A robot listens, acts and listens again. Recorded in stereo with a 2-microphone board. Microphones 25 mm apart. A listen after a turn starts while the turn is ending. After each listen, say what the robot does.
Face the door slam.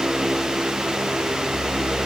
Keep listening.
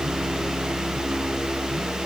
Keep listening.
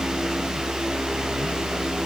I can't make out a door slam.